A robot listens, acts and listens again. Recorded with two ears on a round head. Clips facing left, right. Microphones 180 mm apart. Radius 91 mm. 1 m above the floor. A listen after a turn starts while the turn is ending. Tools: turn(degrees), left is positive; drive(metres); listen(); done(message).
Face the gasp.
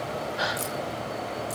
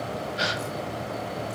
turn(degrees=-35)
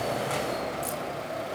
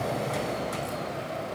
listen()
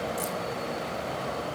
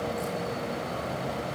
done("I heard a gasp, but can't make it out now. It was about straight ahead or 110° right.")